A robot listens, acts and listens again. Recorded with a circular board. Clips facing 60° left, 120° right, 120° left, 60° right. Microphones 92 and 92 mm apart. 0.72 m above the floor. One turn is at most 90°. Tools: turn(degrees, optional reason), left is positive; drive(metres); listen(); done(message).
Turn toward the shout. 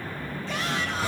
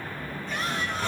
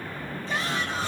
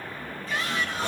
turn(degrees=55, reason="The shout: 55° left.")
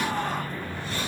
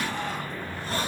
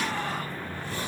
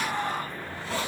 turn(degrees=10, reason="The shout is now 10° left.")
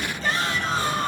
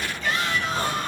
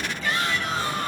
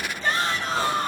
done("Facing the shout, over 4 m away.")